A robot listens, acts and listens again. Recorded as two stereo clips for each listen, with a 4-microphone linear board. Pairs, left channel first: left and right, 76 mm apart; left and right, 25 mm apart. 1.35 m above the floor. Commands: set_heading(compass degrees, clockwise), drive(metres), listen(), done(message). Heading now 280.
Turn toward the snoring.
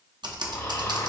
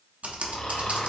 set_heading(230)
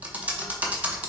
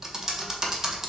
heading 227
listen()
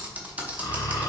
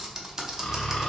set_heading(162)
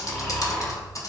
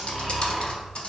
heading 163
done("Facing the snoring, 1 to 2 m away.")